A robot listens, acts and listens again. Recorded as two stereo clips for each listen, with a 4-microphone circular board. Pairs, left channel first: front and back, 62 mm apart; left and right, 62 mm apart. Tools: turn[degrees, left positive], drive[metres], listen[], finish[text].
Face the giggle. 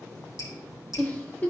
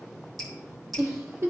Thought: The giggle: 60° right.
Action: turn[-60]
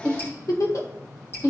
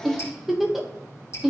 Action: finish[Facing the giggle, under 1 m away.]